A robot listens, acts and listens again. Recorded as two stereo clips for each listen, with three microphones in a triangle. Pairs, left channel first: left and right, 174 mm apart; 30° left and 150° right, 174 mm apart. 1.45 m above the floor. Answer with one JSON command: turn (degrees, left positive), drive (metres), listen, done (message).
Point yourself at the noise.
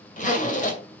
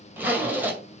{"turn": 130}
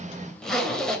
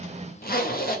{"done": "Facing the zipper, 2 to 4 m away."}